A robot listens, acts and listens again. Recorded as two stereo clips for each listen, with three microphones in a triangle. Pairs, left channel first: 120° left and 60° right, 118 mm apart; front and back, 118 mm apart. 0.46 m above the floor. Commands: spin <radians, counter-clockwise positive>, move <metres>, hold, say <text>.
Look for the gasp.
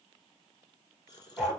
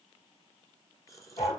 spin 1.13
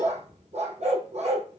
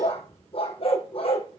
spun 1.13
say I heard a gasp from this way, but can't make it out now.